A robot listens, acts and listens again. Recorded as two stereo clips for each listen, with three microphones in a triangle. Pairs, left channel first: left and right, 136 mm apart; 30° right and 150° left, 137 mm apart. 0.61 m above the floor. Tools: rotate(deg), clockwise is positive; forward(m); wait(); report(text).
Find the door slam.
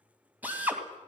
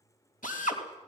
wait()
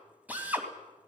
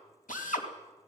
wait()
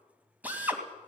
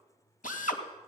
report("I can't make out a door slam, only a drill.")